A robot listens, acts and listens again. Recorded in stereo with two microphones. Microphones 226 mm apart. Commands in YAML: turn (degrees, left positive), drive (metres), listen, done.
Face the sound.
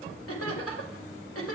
turn: 90
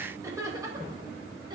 turn: -20
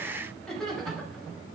done: "Facing the laughter, over 4 m away."